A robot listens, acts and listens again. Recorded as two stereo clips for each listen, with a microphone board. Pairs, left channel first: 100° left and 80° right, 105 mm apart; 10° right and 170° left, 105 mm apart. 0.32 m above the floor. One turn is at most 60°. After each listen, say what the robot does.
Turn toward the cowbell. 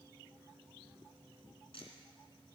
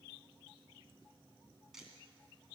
Keep listening.
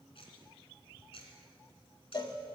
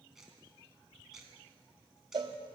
Turn 60° left.
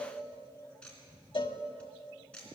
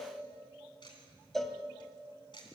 Turn 60° left.
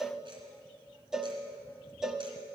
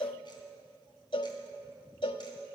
Facing the cowbell, under 1 m away.